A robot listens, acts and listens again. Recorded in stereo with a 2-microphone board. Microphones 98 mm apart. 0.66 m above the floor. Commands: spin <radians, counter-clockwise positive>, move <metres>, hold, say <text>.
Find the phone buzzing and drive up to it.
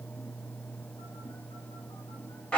hold
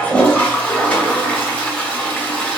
hold
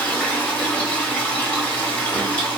say I can't make out a phone buzzing, only a toilet flushing.